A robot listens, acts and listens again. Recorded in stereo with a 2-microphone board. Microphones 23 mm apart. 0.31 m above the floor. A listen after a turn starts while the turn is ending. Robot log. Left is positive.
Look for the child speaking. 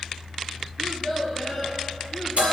cmd yaw -30
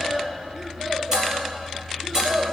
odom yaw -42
note: So it is at 150° right.
cmd yaw -150
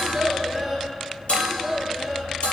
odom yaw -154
end: Facing the child speaking.